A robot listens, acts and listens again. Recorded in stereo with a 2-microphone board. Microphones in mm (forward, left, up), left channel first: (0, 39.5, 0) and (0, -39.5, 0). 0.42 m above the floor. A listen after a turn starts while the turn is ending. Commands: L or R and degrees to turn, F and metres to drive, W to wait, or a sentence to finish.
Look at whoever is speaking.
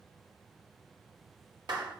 W
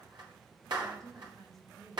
R50
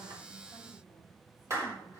W
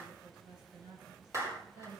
R70
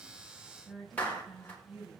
Facing the woman speaking, over 4 m away.